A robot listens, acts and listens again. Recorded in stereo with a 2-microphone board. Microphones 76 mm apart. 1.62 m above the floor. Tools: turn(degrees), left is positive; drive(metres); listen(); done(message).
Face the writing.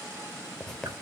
turn(degrees=30)
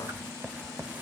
turn(degrees=-25)
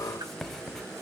done("Facing the writing, under 1 m away.")